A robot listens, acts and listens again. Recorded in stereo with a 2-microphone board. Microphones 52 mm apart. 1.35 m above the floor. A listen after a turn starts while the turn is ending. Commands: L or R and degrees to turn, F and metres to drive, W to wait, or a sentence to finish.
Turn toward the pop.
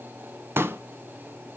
R55
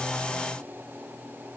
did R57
W
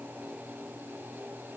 I heard a pop, but can't make it out now. It was about 5° left or 70° right.